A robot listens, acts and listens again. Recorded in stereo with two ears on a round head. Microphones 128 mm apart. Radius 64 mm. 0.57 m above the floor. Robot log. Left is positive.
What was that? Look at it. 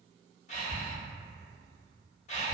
note: The breathing: about 50° left or 130° left.
cmd yaw +50
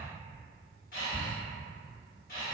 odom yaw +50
note: So it is at 70° left.
cmd yaw +70
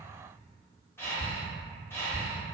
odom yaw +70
note: The breathing is now 15° left.
cmd yaw +15
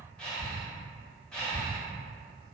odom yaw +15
end: Facing the breathing.